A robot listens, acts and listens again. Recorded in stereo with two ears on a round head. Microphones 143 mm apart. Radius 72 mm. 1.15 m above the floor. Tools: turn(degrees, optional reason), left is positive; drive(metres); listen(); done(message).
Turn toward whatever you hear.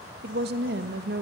turn(degrees=-70, reason="The woman speaking: about 70° right or 110° right.")
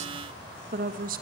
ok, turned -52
turn(degrees=-55, reason="So it is at 55° right.")
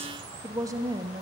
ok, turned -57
turn(degrees=-25, reason="The woman speaking is now 25° right.")
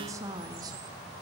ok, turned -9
turn(degrees=-25, reason="The woman speaking is now 25° right.")
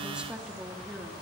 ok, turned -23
done("Found it: a woman speaking, straight ahead.")